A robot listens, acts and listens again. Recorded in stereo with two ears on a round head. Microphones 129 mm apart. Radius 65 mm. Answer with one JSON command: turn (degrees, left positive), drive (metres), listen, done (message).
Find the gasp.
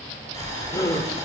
{"turn": 20}
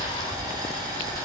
{"listen": true}
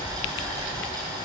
{"done": "I heard a gasp, but can't make it out now. It was about straight ahead or 140° left."}